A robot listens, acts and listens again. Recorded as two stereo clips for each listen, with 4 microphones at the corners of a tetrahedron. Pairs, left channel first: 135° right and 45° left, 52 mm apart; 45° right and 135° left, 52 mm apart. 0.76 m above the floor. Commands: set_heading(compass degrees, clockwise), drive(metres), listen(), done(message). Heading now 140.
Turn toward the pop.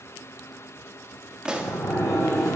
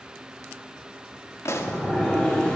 set_heading(165)
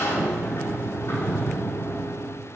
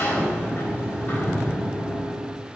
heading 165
done("I heard a pop from this way, but can't make it out now.")